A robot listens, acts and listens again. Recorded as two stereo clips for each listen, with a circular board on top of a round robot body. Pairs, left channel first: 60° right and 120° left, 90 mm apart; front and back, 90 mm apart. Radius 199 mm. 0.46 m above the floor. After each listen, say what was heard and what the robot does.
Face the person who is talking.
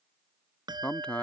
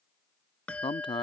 The man speaking: 15° left. Turn 15° left.
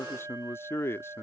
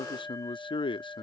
Facing the man speaking.